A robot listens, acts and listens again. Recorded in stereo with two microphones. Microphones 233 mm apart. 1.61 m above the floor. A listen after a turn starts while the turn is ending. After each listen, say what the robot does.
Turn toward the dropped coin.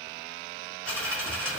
Turn 30° left.
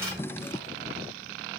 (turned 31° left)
Keep listening.
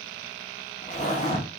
I heard a dropped coin, but can't make it out now. It was about 25° right or 145° left.